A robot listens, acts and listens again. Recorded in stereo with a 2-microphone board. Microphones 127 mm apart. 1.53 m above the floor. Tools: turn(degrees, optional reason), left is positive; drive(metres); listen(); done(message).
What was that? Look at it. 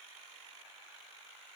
listen()
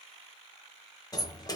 turn(degrees=30, reason="The sliding door: about 30° left or 150° left.")
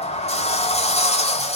turn(degrees=120, reason="So it is at 120° left.")
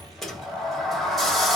done("Found it: a sliding door, straight ahead.")